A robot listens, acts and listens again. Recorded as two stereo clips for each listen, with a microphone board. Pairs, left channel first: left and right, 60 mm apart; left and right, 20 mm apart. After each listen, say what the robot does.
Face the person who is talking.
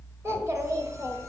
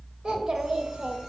Turn 55° right.
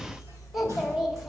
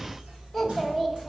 Facing the child speaking.